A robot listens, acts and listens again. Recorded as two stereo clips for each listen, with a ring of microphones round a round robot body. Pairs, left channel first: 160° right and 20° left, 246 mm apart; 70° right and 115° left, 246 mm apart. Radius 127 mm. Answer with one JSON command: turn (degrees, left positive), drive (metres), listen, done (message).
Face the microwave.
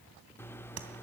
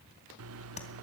{"turn": 120}
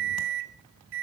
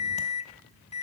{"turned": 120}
{"done": "Facing the microwave."}